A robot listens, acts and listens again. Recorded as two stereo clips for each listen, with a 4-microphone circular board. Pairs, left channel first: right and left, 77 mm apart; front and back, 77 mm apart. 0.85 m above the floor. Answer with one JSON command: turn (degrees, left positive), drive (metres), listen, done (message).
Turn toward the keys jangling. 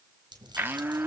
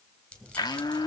{"turn": 75}
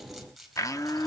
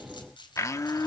{"done": "Facing the keys jangling, 2 to 4 m away."}